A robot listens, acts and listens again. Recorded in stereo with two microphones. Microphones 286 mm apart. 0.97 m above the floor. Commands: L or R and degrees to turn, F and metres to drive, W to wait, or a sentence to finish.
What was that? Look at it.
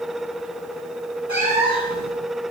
L70
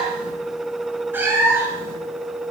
R10
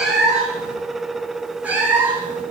Found it: a cat meowing, straight ahead, over 4 m away.